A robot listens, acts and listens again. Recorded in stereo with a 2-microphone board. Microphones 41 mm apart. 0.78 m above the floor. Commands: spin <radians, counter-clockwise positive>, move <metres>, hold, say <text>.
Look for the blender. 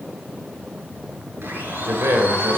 spin -1.05
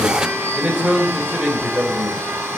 spin -1.13
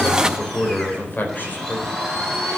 spin 0.17
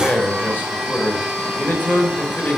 say Found it: a blender, straight ahead, over 4 m away.